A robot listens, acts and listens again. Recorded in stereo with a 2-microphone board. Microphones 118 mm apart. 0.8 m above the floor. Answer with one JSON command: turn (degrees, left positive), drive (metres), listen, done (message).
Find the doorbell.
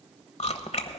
{"listen": true}
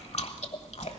{"listen": true}
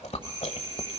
{"turn": -35}
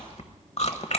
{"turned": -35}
{"listen": true}
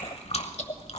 {"listen": true}
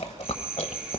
{"turn": -10}
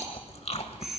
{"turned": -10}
{"done": "Found it: a doorbell, straight ahead, 1 to 2 m away."}